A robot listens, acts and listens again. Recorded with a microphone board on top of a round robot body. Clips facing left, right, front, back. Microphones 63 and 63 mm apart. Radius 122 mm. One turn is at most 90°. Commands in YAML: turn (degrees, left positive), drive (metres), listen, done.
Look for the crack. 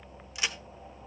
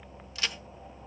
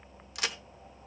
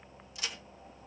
turn: 15
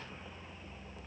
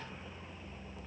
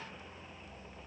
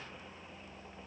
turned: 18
done: "Facing where the crack came from. I can't hear it now."